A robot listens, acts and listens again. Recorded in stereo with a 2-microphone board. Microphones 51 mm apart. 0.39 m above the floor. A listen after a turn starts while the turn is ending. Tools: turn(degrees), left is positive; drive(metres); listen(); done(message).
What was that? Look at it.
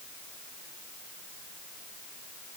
listen()
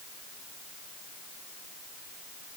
listen()
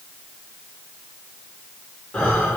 turn(degrees=15)
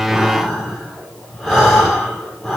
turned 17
done("Facing the breathing, over 4 m away.")